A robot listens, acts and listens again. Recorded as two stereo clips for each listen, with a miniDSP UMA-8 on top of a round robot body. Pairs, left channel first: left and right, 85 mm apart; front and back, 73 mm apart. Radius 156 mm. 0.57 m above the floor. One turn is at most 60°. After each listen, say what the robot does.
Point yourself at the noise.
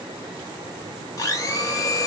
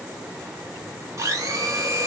Turn 60° left.
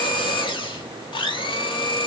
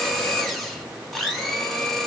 Turn 60° left.
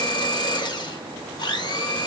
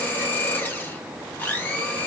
Turn 60° left.
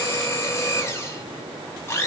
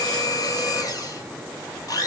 Turn 30° left.
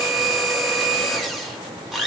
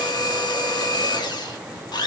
Facing the blender.